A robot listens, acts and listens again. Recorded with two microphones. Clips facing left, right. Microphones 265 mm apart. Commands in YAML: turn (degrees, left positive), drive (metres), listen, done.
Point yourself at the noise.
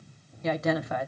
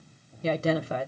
turn: -35
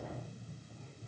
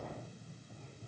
listen: true
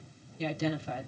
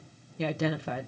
turn: -110
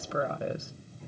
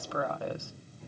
turn: 20
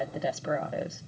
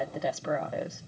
done: "Facing the woman speaking."